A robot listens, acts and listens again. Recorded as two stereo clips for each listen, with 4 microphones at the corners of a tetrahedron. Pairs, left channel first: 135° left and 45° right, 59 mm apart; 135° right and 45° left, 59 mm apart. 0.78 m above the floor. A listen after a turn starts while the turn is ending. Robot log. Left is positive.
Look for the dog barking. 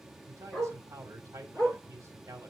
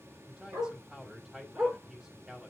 note: The dog barking: 70° left.
cmd yaw +70
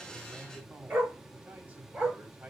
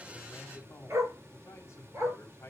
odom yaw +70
note: The dog barking is now 10° left.
cmd yaw +10
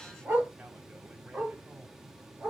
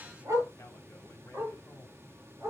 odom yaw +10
note: The dog barking is now 15° left.
cmd yaw +15
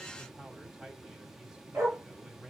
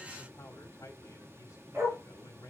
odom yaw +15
end: Found it: a dog barking, straight ahead, over 4 m away.